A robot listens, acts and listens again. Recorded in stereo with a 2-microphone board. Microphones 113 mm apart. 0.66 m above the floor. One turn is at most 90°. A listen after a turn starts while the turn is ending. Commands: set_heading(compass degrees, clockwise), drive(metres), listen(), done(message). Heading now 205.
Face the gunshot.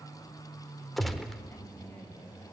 set_heading(175)
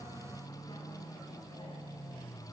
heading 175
listen()
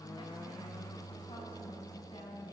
done("I heard a gunshot, but can't make it out now. It was about 30° right or 150° left.")